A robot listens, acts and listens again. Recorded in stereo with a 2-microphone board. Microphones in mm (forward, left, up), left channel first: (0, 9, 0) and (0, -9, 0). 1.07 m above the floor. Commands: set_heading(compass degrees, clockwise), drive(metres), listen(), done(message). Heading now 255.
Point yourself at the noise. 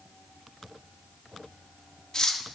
set_heading(225)
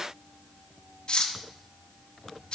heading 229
set_heading(109)
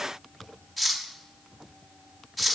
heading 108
done("Found it: cutlery clinking, straight ahead, under 1 m away.")